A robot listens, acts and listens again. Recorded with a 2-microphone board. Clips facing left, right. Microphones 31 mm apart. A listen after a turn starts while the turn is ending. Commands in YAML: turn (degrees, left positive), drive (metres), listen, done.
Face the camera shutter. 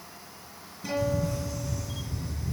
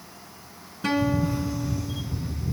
turn: -20
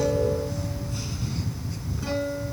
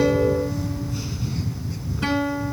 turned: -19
done: "Found it: a camera shutter, straight ahead."